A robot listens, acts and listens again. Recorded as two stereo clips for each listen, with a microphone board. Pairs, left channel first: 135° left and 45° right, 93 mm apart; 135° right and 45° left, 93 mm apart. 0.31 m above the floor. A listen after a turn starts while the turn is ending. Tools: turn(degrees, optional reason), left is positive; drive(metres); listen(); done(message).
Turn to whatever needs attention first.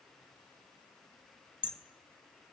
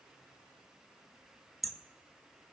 listen()
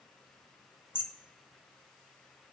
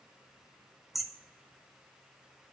listen()
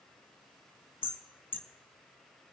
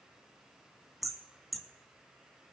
done("I can't make out anything urgent to turn to.")